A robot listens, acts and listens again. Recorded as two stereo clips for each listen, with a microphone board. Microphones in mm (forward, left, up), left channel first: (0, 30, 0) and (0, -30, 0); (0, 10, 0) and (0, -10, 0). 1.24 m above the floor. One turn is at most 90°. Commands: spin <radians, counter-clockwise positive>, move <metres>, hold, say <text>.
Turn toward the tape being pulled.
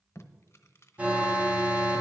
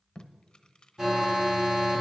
spin 0.79
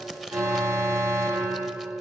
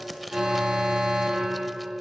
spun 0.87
say Facing the tape being pulled, under 1 m away.